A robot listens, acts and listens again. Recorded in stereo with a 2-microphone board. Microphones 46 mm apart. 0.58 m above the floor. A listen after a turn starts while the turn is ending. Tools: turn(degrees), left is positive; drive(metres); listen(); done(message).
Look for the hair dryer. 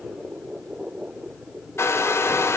turn(degrees=70)
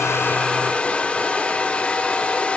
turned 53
turn(degrees=30)
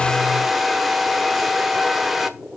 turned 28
done("Found it: a hair dryer, straight ahead.")